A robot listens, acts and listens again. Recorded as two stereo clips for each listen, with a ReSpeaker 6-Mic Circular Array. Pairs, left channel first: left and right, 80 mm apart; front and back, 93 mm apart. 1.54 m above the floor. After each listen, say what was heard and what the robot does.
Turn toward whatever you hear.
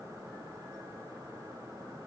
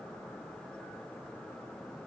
Keep listening.
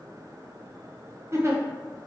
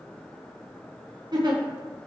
The giggle: 140° right. Turn 140° right.
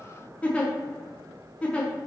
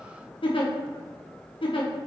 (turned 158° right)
The giggle is now 15° left. Turn 15° left.
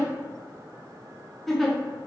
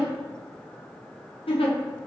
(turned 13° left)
Found it: a giggle, straight ahead, under 1 m away.